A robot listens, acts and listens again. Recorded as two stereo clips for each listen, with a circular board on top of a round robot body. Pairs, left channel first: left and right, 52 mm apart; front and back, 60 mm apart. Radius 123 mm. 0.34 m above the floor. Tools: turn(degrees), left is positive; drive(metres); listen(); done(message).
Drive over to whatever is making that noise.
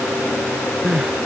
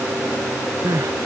turn(degrees=-170)
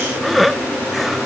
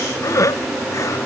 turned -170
drive(metres=1.0)
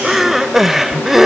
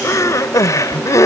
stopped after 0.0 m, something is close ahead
done("Something is in my way. I am facing the crying but have not reached it.")